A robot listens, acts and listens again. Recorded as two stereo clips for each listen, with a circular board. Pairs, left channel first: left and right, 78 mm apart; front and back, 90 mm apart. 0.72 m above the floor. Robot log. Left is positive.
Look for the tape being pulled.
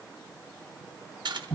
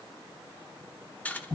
cmd idle
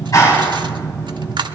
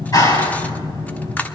cmd idle
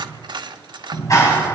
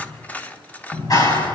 end: I can't make out tape being pulled, only cutlery clinking and a clap.